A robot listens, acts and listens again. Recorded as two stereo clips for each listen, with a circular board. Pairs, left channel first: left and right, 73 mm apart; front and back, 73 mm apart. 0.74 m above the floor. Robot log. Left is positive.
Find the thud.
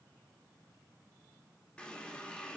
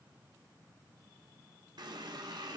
cmd idle
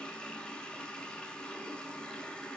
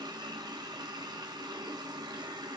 cmd idle
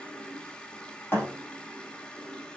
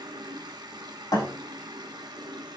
note: The thud: 30° left.
cmd yaw +30
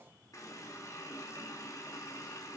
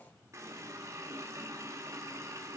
end: Facing where the thud came from. I can't hear it now.